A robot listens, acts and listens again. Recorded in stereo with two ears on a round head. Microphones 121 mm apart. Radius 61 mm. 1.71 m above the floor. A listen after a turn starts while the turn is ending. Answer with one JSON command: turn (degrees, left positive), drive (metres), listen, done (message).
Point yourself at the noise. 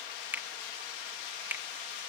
{"turn": -30}
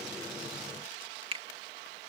{"turn": -135}
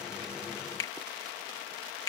{"turn": 30}
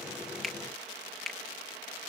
{"done": "Found it: a finger snap, straight ahead."}